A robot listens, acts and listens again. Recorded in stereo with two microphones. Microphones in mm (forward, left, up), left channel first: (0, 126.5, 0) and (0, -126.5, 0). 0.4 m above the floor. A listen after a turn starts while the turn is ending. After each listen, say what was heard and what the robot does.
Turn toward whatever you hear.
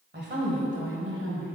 The woman speaking: about 50° right or 130° right. Turn 50° right.
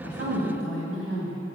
So it is at 60° right. Turn 60° right.
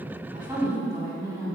The woman speaking is now 10° right. Turn 10° right.
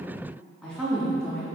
Found it: a woman speaking, straight ahead.